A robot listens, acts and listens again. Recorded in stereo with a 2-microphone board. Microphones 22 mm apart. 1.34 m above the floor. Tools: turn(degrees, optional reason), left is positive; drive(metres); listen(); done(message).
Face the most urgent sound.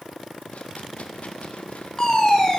turn(degrees=30, reason="The fire alarm: about 30° left or 150° left.")
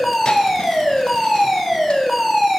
done("Found it: a fire alarm, straight ahead, 2 to 4 m away.")